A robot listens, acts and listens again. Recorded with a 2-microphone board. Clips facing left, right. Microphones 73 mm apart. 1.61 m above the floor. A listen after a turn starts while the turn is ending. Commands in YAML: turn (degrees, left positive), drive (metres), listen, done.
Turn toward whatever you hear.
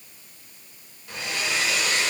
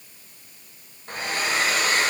turn: -40
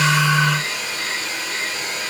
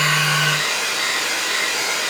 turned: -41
turn: -95
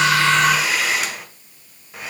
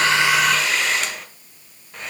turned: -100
done: "Found it: a hair dryer, straight ahead, 1 to 2 m away."